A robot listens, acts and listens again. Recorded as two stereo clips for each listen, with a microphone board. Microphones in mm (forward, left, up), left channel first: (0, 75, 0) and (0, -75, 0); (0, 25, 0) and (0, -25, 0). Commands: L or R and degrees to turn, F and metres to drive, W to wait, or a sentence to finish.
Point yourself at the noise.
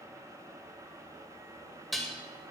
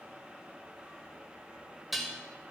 L30
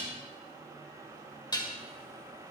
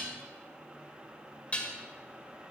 L150
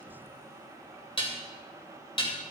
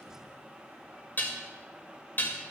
L40
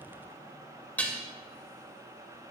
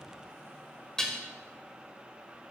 L10
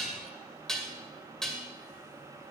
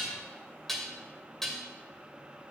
Facing the dishes clattering, 2 to 4 m away.